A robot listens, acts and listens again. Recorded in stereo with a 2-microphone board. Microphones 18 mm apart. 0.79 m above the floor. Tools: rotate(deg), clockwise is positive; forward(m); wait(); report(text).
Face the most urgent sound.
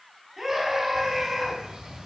rotate(25)
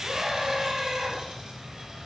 rotate(130)
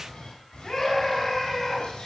rotate(-20)
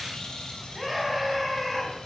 report("Found it: a scream, straight ahead, over 4 m away.")